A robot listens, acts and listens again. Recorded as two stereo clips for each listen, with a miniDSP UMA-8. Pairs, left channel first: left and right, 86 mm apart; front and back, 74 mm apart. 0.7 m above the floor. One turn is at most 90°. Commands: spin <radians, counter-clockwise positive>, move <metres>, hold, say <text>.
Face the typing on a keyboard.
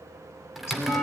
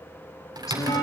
spin -1.57
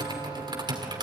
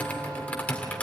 spin -1.22
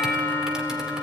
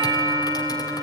hold
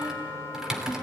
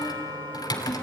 say Facing the typing on a keyboard.